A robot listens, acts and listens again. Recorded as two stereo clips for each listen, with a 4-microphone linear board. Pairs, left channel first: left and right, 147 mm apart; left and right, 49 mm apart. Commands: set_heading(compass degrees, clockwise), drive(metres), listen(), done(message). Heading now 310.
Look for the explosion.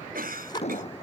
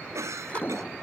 set_heading(265)
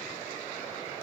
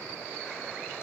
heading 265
listen()
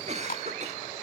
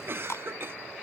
done("I heard an explosion, but can't make it out now. It was about straight ahead or 90° left.")